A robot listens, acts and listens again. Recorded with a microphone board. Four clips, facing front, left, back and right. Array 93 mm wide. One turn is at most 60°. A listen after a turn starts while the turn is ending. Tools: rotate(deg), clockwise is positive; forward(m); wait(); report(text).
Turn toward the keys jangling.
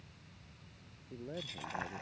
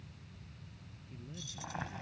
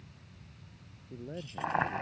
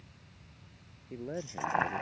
rotate(25)
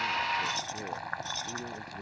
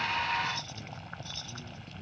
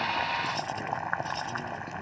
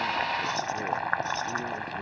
wait()
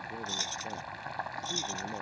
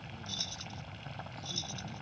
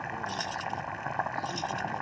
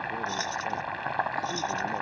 report("Facing the keys jangling.")